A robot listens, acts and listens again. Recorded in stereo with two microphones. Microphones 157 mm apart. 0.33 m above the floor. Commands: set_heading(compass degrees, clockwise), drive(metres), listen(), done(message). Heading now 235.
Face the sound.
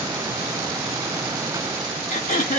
set_heading(185)
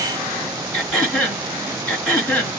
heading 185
set_heading(175)
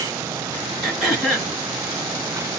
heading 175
done("Facing the throat clearing.")